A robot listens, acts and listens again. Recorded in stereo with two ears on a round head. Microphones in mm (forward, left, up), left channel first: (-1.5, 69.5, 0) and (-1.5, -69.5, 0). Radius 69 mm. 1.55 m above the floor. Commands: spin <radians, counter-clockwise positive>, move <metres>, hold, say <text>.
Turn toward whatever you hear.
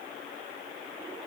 hold
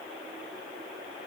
hold
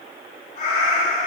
spin 0.87
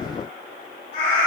spin 1.13
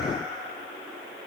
hold
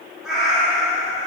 say Found it: a cat meowing, straight ahead.